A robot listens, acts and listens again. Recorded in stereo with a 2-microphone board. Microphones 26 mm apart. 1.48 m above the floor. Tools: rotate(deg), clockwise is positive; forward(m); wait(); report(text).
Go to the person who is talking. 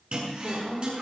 rotate(25)
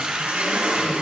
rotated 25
wait()
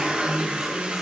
wait()
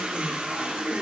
report("I heard a woman speaking, but can't make it out now. It was about straight ahead or 130° right. I did not reach it.")